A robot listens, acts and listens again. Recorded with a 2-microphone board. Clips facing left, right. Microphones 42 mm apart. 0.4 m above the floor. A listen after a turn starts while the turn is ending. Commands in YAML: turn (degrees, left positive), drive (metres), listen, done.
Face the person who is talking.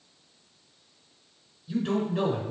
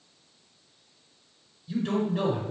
turn: 30
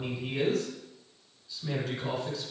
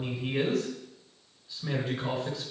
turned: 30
turn: -15
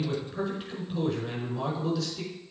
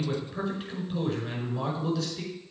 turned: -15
done: "Found it: a man speaking, straight ahead, over 4 m away."